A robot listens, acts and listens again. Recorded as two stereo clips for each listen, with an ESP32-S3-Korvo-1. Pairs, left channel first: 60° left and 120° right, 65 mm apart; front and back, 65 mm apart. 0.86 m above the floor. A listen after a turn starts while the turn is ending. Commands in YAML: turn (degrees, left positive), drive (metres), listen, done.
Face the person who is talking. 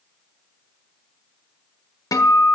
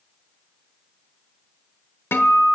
listen: true
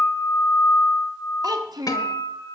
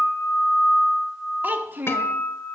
turn: -120
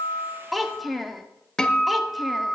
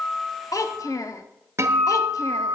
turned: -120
turn: -30
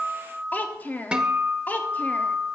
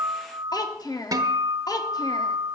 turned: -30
done: "Found it: a child speaking, straight ahead, under 1 m away."